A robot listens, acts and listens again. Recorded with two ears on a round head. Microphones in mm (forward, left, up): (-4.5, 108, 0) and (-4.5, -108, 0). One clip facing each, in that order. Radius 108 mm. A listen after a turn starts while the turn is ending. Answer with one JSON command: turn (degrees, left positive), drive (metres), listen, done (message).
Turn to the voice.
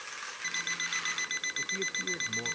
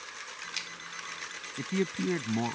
{"turn": -90}
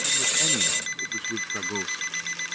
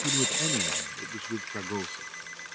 {"done": "Facing the man speaking."}